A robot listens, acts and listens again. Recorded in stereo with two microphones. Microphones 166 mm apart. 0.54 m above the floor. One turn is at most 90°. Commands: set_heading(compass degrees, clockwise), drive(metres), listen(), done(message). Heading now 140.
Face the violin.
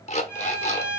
set_heading(110)
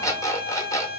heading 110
set_heading(125)
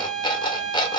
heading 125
done("Facing the violin.")